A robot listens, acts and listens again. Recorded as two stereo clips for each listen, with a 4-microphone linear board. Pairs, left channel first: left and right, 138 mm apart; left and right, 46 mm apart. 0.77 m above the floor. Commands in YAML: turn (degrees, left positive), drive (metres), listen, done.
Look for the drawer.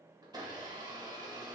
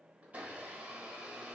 listen: true
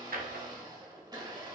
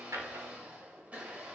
turn: -90
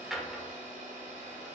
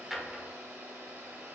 done: "Found it: a drawer, straight ahead."